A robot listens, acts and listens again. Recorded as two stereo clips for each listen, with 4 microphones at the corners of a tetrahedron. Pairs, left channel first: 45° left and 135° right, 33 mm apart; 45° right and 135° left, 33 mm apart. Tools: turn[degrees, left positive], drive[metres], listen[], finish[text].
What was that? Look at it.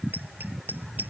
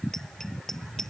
Thought: The bicycle bell: 125° right.
Action: turn[-125]
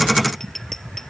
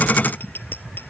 Thought: The bicycle bell is now 35° right.
Action: turn[-35]
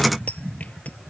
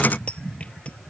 Action: listen[]
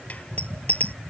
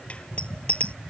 Action: finish[Facing the bicycle bell.]